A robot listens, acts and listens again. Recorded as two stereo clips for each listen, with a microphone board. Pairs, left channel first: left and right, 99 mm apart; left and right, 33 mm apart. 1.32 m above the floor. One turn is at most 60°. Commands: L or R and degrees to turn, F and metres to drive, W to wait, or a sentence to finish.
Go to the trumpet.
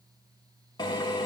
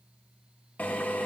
W
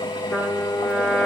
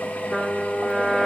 L30
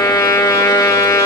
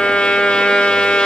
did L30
L60
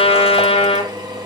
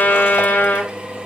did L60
L60
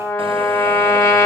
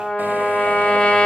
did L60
L25
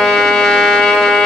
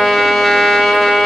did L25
F1.0
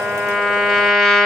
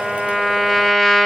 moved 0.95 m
F1.0
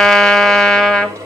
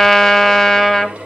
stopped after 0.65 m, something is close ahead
Arrived at the trumpet, straight ahead.